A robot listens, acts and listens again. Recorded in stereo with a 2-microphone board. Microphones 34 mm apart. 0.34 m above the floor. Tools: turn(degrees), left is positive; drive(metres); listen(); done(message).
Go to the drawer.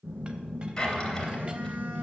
turn(degrees=30)
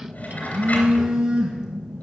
listen()
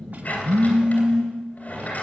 turn(degrees=135)
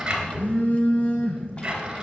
turn(degrees=-20)
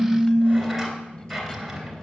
drive(metres=1.0)
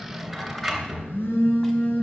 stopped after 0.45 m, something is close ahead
done("Something is in my way. I am facing the drawer but have not reached it.")